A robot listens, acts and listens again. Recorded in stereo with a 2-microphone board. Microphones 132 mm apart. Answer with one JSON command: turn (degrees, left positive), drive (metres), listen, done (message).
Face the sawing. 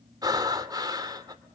{"listen": true}
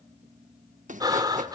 {"turn": -75}
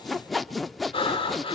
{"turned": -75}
{"done": "Found it: sawing, straight ahead."}